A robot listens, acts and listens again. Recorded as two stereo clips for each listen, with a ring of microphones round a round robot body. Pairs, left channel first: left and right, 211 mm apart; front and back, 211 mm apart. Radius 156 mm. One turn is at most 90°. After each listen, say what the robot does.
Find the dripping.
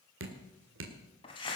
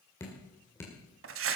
Turn 80° right.
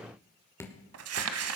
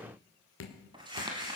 Turn 10° left.
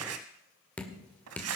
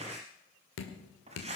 Facing the dripping, 2 to 4 m away.